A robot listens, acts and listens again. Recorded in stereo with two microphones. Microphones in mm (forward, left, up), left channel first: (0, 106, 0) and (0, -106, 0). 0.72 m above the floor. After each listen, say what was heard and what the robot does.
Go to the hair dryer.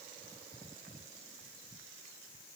Keep listening.
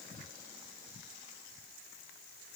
Keep listening.
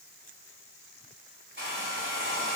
The hair dryer: about 60° right or 120° right. Turn 60° right.
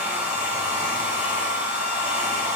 Drive 1.0 m forward.
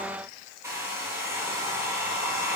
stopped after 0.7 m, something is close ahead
The hair dryer is now 15° right. Turn 15° right.
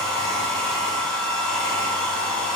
Blocked. The hair dryer is further on, straight ahead.